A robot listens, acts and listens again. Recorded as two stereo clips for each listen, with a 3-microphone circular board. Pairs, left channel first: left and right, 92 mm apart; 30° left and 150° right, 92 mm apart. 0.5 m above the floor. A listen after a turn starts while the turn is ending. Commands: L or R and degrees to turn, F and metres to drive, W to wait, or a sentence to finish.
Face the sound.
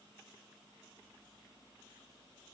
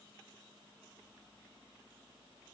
W
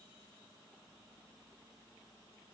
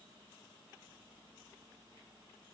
W
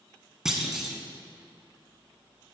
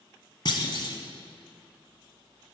Found it: a clunk, straight ahead.